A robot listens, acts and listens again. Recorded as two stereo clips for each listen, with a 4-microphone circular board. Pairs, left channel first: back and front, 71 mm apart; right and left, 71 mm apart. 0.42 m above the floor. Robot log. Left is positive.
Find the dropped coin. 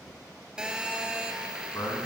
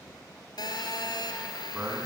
cmd idle
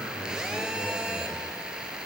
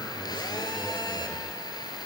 cmd idle
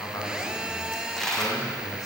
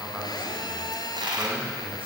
note: The dropped coin: 95° left.
cmd yaw +95
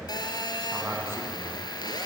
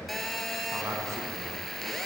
end: Facing where the dropped coin came from. I can't hear it now.